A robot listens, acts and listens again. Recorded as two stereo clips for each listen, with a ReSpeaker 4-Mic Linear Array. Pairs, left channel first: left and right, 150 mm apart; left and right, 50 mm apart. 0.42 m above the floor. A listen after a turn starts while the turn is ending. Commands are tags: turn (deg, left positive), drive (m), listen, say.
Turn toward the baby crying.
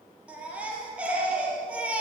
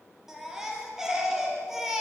<turn deg="-30"/>
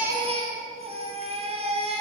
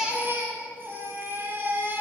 <turn deg="-135"/>
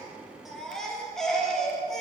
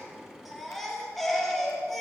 <say>Facing the baby crying, over 4 m away.</say>